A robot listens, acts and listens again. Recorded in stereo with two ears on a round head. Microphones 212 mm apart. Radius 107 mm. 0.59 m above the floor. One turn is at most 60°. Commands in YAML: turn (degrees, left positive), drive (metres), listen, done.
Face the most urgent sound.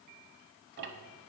listen: true
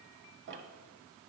listen: true
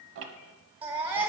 turn: -20
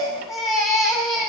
done: "Found it: a baby crying, straight ahead, 1 to 2 m away."